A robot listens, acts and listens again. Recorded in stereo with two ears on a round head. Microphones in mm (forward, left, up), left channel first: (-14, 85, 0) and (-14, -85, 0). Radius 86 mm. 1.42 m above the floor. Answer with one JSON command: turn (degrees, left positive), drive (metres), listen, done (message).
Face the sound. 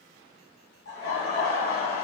{"turn": 45}
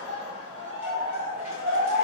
{"turn": -15}
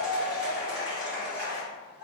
{"turn": -10}
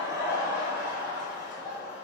{"done": "Found it: laughter, straight ahead."}